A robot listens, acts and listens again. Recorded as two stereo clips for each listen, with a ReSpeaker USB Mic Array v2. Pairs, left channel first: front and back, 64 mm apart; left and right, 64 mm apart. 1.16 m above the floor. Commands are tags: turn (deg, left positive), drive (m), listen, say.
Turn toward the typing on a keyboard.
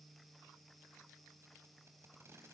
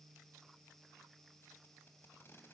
<listen/>
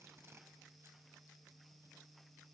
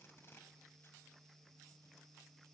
<listen/>
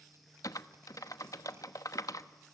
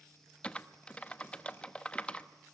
<turn deg="20"/>
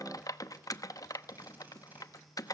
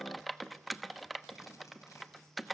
<say>Found it: typing on a keyboard, straight ahead.</say>